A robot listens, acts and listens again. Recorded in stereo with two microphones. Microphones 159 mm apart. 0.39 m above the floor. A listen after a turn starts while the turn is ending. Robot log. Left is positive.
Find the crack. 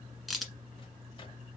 cmd yaw +30
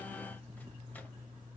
cmd idle
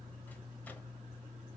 end: I heard a crack, but can't make it out now. It was about 30° right or 150° left.